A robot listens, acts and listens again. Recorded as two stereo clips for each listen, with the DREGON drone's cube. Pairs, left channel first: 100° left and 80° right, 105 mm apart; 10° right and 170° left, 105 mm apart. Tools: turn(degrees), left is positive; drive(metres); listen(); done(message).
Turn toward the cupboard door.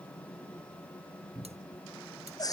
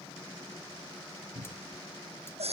turn(degrees=-150)
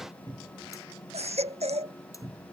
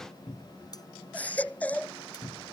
turn(degrees=-30)
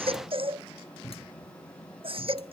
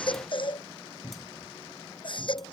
done("Facing the cupboard door.")